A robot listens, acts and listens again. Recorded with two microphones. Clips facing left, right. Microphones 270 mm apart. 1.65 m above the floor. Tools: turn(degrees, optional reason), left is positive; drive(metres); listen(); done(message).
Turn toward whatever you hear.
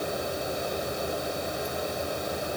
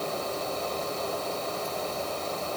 listen()
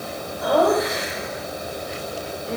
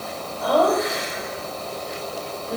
turn(degrees=25, reason="The laughter: about 25° left or 155° left.")
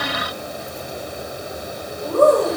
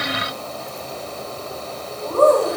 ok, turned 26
turn(degrees=15, reason="The laughter: about 15° left or 165° left.")
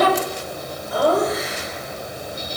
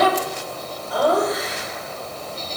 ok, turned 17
done("Found it: laughter, straight ahead, over 4 m away.")